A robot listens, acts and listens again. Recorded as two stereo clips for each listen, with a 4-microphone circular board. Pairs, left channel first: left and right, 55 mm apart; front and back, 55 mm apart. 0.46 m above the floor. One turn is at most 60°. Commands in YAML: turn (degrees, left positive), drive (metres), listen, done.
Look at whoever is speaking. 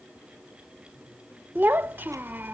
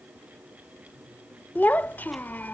turn: -50
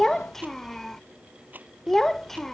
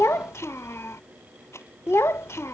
turn: 10
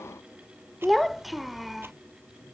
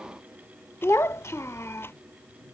done: "Facing the child speaking."